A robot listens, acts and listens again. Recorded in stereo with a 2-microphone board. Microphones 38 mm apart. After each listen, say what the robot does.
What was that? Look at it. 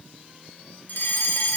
Turn 55° left.
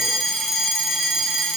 Facing the fire alarm.